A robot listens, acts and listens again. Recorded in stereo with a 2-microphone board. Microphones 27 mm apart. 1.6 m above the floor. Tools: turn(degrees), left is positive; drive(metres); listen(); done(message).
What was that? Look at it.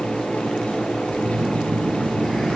turn(degrees=30)
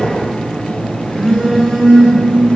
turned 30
turn(degrees=145)
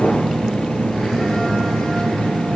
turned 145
done("Found it: a phone buzzing, straight ahead.")